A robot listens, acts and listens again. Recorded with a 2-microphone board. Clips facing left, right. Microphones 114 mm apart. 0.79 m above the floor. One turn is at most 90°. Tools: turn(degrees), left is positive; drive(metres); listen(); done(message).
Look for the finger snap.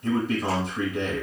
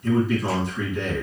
listen()
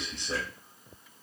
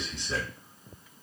listen()
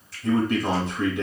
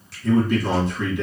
done("I can't make out a finger snap, only a man speaking.")